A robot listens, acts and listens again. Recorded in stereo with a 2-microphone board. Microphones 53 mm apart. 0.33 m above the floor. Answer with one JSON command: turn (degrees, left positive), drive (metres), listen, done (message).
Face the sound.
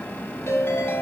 {"turn": 60}
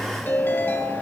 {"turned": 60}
{"turn": 55}
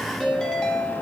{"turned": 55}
{"turn": 10}
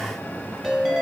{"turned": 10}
{"done": "Facing the ringtone, 1 to 2 m away."}